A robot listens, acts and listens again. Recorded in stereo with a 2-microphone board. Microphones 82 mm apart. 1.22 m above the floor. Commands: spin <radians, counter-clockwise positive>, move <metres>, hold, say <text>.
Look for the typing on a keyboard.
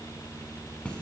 hold
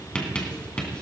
hold
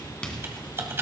spin -0.52
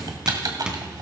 spin -2.09
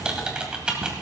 spin -0.26
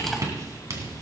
hold
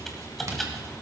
say Found it: typing on a keyboard, straight ahead, 2 to 4 m away.